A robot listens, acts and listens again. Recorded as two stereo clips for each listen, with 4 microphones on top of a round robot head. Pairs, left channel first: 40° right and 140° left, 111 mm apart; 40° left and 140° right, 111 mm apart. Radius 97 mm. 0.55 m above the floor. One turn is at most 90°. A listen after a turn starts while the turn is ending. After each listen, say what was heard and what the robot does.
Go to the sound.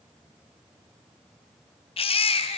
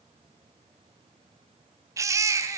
The baby crying: 75° right. Turn 75° right.
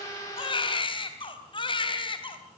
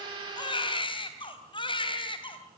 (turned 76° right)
Drive 1.0 m forward.
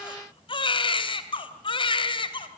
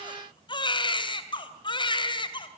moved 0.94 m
Drive 1.0 m forward.
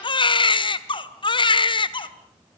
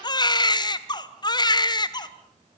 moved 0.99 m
Drive 1.0 m forward.
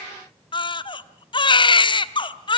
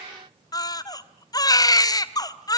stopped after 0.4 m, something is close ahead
Arrived at the baby crying, straight ahead.